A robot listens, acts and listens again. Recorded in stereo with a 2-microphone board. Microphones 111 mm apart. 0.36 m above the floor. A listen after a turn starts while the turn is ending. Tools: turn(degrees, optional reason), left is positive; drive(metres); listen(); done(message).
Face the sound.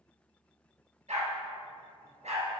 turn(degrees=-90)
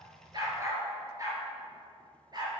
turn(degrees=-40, reason="So it is at 40° right.")
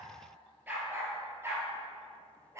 turn(degrees=-25, reason="The dog barking is now 25° right.")
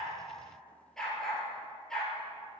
done("Found it: a dog barking, straight ahead.")